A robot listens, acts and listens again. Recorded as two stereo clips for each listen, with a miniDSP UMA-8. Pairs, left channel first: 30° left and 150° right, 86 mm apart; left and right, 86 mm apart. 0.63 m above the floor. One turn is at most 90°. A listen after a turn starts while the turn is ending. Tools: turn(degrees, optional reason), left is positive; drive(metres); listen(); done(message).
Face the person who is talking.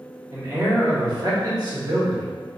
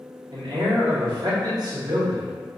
turn(degrees=-90, reason="The man speaking: 130° right.")
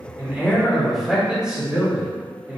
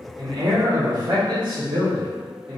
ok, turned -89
turn(degrees=-80, reason="The man speaking is now 80° right.")
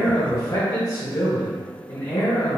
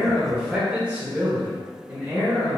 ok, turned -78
turn(degrees=-25, reason="The man speaking is now 25° right.")
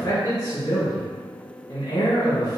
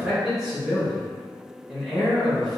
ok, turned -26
done("Facing the man speaking.")